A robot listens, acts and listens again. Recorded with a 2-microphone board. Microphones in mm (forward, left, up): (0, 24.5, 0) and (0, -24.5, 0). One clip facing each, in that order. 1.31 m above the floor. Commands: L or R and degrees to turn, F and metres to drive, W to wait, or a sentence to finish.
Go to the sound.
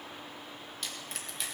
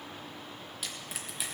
R30
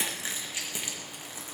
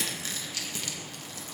L20
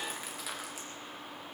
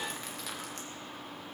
W
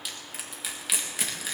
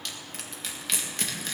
F1.0
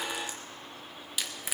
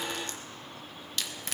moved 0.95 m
L10
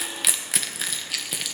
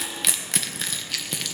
F1.0
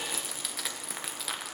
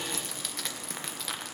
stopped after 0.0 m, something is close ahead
Arrived at the crushing, straight ahead.